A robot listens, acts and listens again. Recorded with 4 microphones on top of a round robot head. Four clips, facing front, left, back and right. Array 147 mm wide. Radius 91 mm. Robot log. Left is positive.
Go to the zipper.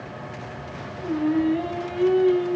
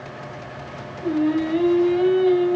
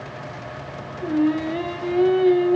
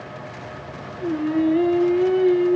cmd idle
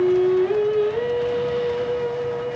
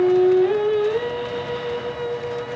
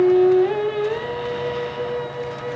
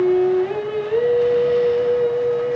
cmd idle
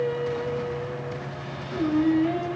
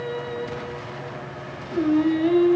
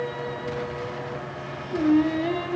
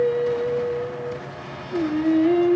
end: I can't make out a zipper to turn to.